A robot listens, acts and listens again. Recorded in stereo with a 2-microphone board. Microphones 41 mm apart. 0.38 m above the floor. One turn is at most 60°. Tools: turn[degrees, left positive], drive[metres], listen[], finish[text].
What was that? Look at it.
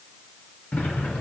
Thought: The sliding door: about 40° left or 140° left.
Action: turn[40]
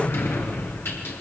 Thought: So it is at 95° left.
Action: turn[60]
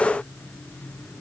Thought: The sliding door is now 35° left.
Action: turn[35]
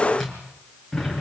Action: finish[Found it: a sliding door, straight ahead, over 4 m away.]